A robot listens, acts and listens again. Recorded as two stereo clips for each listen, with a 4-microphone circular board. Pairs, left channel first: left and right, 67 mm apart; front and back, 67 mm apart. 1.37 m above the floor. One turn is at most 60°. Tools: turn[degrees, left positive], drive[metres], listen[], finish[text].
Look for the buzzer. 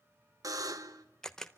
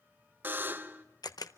Thought: The buzzer: 120° right.
Action: turn[-60]
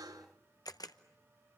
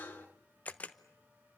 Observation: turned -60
Thought: The buzzer is now 65° right.
Action: turn[-60]
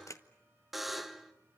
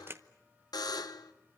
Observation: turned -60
Action: finish[Found it: a buzzer, straight ahead.]